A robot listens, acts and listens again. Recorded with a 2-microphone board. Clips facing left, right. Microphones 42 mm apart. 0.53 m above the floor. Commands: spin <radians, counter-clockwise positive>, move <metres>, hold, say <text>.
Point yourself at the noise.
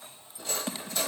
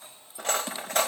spin -1.13
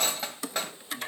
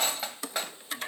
say Facing the cutlery clinking.